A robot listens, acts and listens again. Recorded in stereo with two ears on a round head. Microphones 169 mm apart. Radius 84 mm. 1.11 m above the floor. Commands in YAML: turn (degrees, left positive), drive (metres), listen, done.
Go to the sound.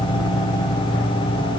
listen: true
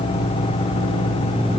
listen: true
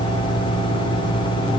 done: "I can't make out anything."